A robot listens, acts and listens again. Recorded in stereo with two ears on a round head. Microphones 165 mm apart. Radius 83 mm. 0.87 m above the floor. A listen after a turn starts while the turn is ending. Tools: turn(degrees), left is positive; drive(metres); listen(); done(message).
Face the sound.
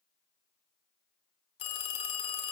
turn(degrees=30)
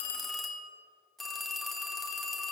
done("Found it: a phone ringing, straight ahead.")